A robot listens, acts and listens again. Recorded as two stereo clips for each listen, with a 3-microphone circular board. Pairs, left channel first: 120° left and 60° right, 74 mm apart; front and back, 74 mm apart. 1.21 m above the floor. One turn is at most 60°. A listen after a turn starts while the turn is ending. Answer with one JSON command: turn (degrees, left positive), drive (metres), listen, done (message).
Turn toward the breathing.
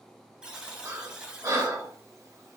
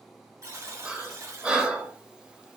{"turn": -60}
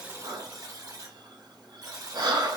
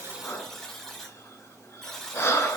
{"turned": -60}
{"turn": -50}
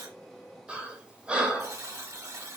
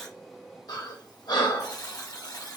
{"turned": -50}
{"turn": 15}
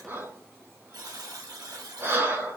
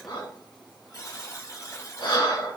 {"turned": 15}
{"done": "Facing the breathing."}